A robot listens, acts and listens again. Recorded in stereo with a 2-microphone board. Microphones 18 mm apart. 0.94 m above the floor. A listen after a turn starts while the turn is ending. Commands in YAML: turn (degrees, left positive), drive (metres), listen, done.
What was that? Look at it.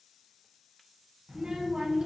turn: -60
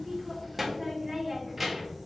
done: "Found it: a child speaking, straight ahead."